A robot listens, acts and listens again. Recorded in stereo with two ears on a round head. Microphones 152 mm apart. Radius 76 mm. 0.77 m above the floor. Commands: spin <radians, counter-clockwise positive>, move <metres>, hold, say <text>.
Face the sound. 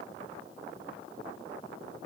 hold
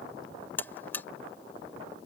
spin 0.52
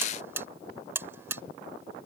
spin -0.26
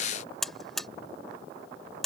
say Facing the buzzer.